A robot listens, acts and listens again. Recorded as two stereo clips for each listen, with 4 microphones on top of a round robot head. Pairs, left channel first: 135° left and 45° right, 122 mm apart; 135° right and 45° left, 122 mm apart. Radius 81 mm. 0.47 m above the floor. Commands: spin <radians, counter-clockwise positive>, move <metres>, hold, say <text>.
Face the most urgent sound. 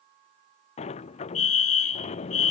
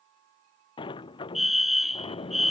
spin 2.36
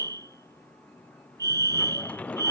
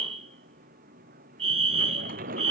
spin 0.26
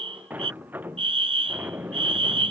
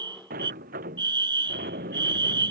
say Facing the fire alarm.